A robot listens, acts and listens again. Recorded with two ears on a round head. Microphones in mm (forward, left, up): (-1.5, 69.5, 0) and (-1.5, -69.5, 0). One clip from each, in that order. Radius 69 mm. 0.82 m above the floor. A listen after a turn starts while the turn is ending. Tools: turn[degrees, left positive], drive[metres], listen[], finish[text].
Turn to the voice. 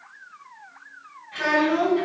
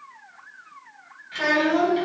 Thought: The child speaking: about 40° right or 140° right.
Action: turn[-40]
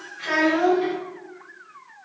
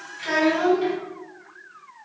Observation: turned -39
Action: finish[Facing the child speaking, 1 to 2 m away.]